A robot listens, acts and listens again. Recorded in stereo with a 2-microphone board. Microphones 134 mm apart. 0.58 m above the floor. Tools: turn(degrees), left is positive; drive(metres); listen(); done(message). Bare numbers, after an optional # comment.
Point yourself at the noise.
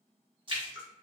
# The splash: about 40° right or 140° right.
turn(-40)
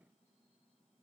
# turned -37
listen()
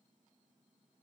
done("I heard a splash, but can't make it out now. It was about straight ahead or 105° right.")